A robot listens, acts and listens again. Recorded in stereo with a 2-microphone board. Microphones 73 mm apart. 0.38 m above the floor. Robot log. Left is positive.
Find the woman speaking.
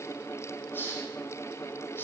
cmd idle
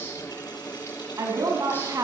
note: The woman speaking: about 45° right or 135° right.
cmd yaw -45
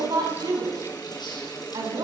note: So it is at 85° right.
cmd yaw -85
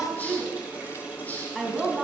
end: Facing the woman speaking.